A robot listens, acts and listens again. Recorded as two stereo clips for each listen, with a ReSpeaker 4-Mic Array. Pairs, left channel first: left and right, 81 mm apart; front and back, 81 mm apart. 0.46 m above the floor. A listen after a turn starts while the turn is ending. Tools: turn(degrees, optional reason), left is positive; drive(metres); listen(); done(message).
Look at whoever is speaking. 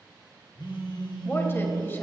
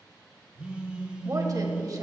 turn(degrees=150, reason="The woman speaking: 150° left.")
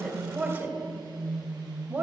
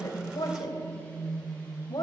turn(degrees=-25, reason="The woman speaking is now 25° right.")
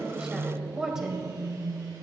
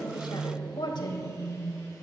turn(degrees=-10, reason="The woman speaking is now 10° right.")
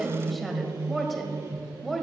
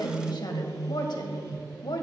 done("Found it: a woman speaking, straight ahead, 1 to 2 m away.")